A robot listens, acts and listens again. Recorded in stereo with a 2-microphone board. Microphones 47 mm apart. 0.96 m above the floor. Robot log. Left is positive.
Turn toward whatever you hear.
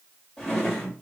cmd yaw +30
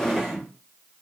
note: So it is at 10° right.
cmd yaw -10
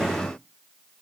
cmd idle
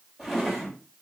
end: Facing the drawer.